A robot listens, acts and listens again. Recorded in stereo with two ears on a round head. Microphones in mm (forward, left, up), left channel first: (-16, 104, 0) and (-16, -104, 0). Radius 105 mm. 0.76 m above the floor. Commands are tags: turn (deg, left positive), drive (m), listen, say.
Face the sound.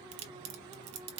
<turn deg="-70"/>
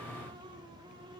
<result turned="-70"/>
<listen/>
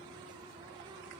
<say>I heard a crack, but can't make it out now. It was about straight ahead or 40° right.</say>